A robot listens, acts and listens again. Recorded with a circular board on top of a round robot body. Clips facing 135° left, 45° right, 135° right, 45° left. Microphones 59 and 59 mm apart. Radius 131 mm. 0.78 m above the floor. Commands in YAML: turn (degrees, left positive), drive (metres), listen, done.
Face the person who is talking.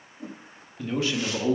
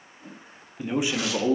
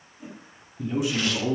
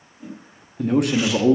turn: 30
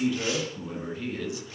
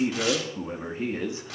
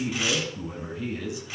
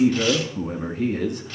turn: 10
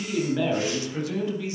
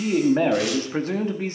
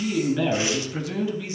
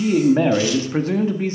done: "Found it: a man speaking, straight ahead, 2 to 4 m away."